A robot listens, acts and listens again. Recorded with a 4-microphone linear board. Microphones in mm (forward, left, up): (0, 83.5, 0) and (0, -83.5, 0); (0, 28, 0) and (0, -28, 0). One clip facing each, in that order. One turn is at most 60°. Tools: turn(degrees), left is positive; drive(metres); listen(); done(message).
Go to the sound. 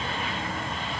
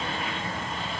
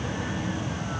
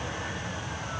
listen()
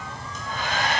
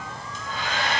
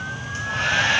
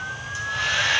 turn(degrees=50)
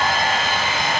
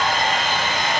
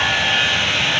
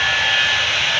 turn(degrees=10)
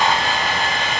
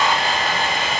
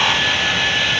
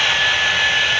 drive(metres=1.0)
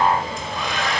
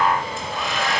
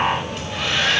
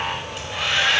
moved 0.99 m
drive(metres=1.0)
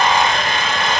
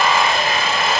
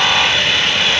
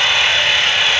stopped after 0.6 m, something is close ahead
done("I am next to the hair dryer.")